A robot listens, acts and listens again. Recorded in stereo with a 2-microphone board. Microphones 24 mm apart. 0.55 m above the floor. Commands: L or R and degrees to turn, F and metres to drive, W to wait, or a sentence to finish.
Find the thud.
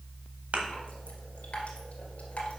R65
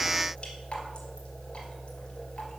W
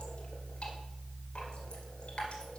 I heard a thud, but can't make it out now. It was about straight ahead or 50° right.